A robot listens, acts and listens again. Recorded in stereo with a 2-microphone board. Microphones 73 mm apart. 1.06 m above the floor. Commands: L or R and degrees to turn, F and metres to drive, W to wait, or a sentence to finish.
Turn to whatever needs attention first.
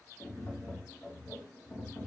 W
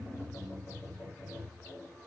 W
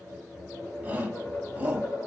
R20
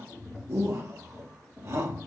R140
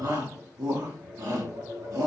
R55
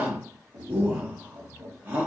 R25
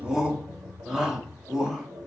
R10
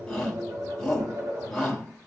Found it: a shout, straight ahead, 1 to 2 m away.